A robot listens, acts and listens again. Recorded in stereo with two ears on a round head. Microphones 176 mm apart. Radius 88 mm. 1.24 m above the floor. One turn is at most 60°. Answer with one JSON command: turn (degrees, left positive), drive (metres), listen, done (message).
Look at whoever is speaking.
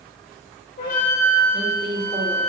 {"turn": -30}
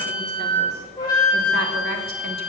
{"listen": true}
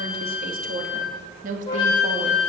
{"turn": -40}
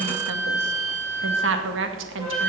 {"turn": -60}
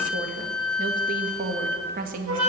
{"turn": -45}
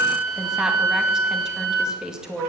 {"done": "Found it: a woman speaking, straight ahead."}